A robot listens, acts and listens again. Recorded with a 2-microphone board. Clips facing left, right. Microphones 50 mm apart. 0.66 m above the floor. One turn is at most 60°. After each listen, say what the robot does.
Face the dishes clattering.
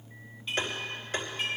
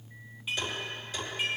Turn 30° right.
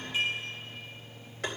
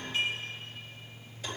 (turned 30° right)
Turn 20° left.
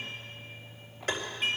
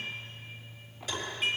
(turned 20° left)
Facing the dishes clattering, over 4 m away.